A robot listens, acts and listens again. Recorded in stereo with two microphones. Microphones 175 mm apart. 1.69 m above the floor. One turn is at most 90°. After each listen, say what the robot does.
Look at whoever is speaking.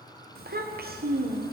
Turn 60° right.
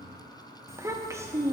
Turn 20° right.
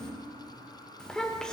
Found it: a child speaking, straight ahead.